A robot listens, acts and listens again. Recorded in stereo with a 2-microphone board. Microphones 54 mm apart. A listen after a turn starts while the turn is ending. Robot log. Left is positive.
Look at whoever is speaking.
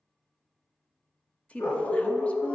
note: The woman speaking: about 25° left or 155° left.
cmd yaw +25
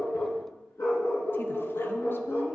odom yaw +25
cmd idle
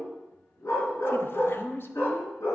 note: So it is at 125° left.
cmd yaw +125
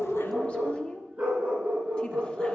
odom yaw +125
note: The woman speaking is now 25° left.
cmd yaw +25
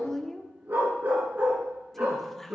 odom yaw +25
end: Found it: a woman speaking, straight ahead.